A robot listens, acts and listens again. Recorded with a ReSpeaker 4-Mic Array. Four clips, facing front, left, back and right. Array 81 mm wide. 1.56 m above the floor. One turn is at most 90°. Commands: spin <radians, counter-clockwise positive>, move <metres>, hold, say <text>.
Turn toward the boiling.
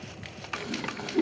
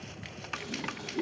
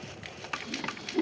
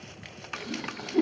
spin -0.52
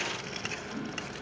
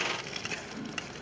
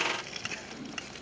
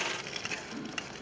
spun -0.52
hold
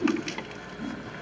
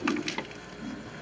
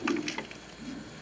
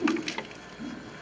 say Facing the boiling.